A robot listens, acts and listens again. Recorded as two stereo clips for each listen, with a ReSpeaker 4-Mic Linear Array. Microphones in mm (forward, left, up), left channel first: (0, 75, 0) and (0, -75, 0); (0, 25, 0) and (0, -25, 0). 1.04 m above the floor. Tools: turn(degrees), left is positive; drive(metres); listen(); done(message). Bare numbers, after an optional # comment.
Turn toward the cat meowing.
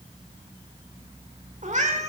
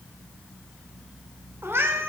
# The cat meowing: about 50° right or 130° right.
turn(-50)
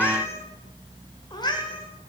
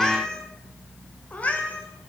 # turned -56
# So it is at 35° left.
turn(35)
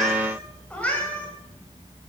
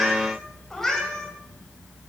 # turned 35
# The cat meowing is now 10° left.
turn(10)
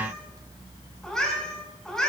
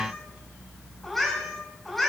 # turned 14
done("Facing the cat meowing.")